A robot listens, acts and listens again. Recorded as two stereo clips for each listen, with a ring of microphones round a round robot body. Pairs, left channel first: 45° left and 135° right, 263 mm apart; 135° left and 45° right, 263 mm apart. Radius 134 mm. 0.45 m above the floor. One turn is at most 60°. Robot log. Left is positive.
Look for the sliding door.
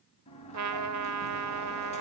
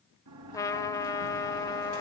note: The sliding door: 20° right.
cmd yaw -20
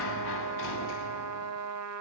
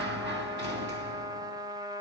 end: Found it: a sliding door, straight ahead, 2 to 4 m away.